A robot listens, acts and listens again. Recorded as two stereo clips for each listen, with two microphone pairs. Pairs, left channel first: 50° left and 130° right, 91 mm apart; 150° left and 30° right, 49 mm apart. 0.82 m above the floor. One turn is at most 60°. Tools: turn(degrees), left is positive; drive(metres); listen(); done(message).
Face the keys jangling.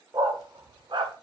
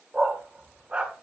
listen()
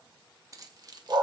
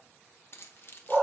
turn(degrees=-60)
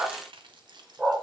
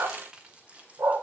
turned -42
turn(degrees=-60)
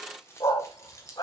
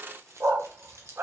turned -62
done("Facing the keys jangling, 2 to 4 m away.")